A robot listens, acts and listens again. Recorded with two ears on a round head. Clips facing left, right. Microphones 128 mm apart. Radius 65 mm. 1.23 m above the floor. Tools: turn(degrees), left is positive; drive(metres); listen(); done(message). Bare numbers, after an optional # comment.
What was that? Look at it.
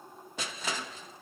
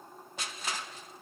# The crushing: about 70° left or 110° left.
turn(70)
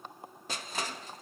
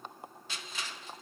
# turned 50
# So it is at 40° left.
turn(40)
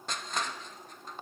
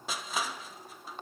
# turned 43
done("Facing the crushing.")